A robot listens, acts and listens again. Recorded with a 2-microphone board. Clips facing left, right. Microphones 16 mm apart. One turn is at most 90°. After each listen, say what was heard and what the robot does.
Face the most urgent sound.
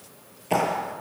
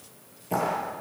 Keep listening.
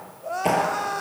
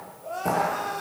The crying: about 30° left or 150° left. Turn 30° left.
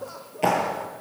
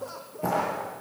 Facing the crying, 2 to 4 m away.